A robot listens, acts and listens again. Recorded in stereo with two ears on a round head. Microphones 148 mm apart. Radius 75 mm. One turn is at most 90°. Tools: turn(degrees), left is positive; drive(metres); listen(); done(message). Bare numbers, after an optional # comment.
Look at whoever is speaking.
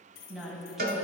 turn(-30)
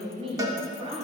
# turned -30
# So it is at 140° right.
turn(-90)
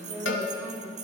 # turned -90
# The woman speaking is now 10° right.
turn(-10)
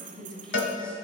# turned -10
done("Found it: a woman speaking, straight ahead.")